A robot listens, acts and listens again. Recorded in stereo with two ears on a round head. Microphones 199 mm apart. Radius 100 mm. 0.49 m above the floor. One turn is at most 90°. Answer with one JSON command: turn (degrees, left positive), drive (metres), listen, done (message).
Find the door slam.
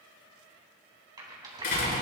{"turn": 50}
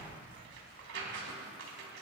{"listen": true}
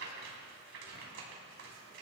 {"done": "I heard a door slam, but can't make it out now. It was about straight ahead or 80° left."}